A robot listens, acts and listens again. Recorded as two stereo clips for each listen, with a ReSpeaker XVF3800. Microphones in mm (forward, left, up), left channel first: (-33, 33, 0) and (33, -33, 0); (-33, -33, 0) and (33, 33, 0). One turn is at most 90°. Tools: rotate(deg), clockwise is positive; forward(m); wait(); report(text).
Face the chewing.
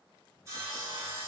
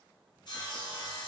wait()
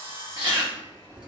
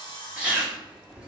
rotate(35)
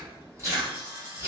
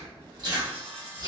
rotate(-10)
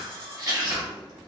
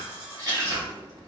report("Facing the chewing, 1 to 2 m away.")